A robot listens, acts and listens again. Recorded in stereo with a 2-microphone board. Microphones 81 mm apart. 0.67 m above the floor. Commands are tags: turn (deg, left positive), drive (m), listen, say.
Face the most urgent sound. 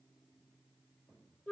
<listen/>
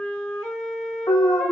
<turn deg="90"/>
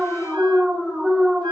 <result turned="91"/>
<say>Found it: an alarm, straight ahead, under 1 m away.</say>